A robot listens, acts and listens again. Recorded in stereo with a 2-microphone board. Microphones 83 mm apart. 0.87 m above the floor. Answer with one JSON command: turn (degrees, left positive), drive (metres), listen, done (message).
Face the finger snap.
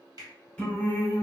{"turn": -50}
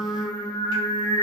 {"listen": true}
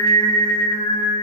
{"listen": true}
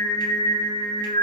{"done": "I heard a finger snap, but can't make it out now. It was about straight ahead or 80° right."}